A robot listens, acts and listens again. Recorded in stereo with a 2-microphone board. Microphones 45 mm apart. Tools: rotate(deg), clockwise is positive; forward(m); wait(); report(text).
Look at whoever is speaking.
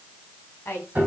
rotate(-60)
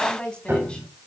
rotate(-25)
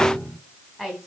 report("Facing the woman speaking.")